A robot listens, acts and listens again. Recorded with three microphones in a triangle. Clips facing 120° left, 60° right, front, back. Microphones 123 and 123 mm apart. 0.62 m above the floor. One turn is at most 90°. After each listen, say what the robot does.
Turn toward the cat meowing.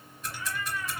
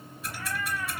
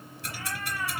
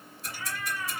Turn 30° right.
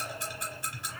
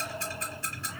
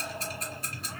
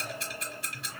Turn 10° left.
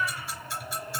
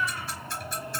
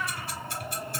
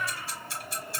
Facing the cat meowing, 2 to 4 m away.